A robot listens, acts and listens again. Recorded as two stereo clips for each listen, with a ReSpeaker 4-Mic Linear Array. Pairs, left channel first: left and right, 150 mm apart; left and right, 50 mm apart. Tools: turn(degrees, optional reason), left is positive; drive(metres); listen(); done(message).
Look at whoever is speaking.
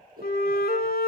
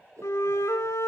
listen()
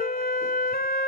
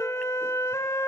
listen()
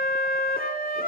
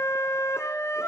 done("I can't make out anyone speaking to turn to.")